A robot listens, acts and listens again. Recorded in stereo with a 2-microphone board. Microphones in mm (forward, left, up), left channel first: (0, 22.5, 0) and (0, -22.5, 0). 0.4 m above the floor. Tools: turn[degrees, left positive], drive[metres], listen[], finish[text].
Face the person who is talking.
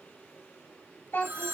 Thought: The child speaking: about 60° left or 120° left.
Action: turn[60]
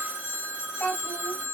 Thought: So it is at 35° left.
Action: turn[35]
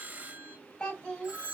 Thought: The child speaking is now 25° left.
Action: turn[25]
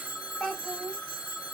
Thought: The child speaking is now 15° left.
Action: turn[15]
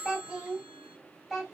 Action: finish[Found it: a child speaking, straight ahead.]